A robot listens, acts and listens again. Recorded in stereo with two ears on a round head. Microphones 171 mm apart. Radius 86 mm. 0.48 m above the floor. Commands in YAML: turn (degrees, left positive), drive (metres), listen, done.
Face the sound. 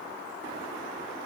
listen: true
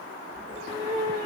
turn: -35
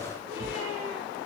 turn: -105
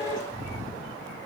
turn: -30
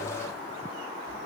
listen: true
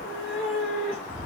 done: "Facing the cat meowing."